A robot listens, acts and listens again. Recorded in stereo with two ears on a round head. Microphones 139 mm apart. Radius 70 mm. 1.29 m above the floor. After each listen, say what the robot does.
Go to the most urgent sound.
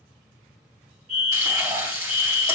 Turn 55° right.
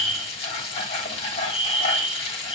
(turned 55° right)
Drive 1.0 m forward.
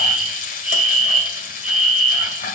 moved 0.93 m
Drive 1.0 m forward.
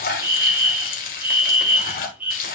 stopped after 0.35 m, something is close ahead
Turn 15° right.
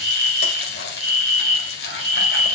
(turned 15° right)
Arrived at the fire alarm, straight ahead.